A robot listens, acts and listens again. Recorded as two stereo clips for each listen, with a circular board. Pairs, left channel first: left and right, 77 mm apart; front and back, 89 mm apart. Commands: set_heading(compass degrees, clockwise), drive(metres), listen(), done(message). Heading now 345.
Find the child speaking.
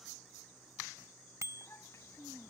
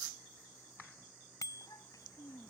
set_heading(300)
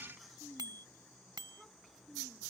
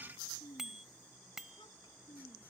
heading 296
done("Facing the child speaking.")